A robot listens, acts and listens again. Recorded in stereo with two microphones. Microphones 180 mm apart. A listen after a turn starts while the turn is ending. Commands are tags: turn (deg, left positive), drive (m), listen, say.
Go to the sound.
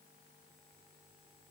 <listen/>
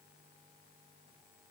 <listen/>
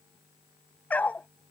<turn deg="30"/>
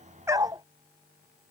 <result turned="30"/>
<turn deg="-20"/>
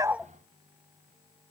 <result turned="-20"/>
<listen/>
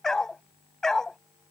<drive m="1.0"/>
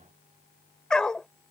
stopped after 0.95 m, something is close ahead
<say>I am next to the dog barking.</say>